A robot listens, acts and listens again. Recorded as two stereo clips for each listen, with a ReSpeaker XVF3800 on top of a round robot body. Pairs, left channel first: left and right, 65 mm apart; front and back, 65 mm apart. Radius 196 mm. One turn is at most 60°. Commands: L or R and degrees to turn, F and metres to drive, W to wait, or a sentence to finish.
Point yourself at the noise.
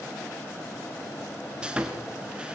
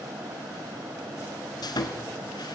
R15
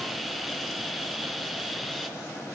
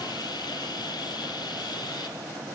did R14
Facing the sawing.